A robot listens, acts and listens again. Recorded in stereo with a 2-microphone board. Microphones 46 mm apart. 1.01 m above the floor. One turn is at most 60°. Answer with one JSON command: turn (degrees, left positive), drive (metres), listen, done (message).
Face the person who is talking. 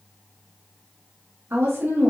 {"turn": -60}
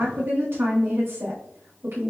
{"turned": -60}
{"turn": -60}
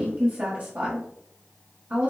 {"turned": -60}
{"turn": -35}
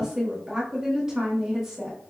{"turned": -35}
{"turn": -10}
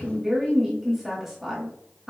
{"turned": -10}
{"done": "Found it: a woman speaking, straight ahead, 1 to 2 m away."}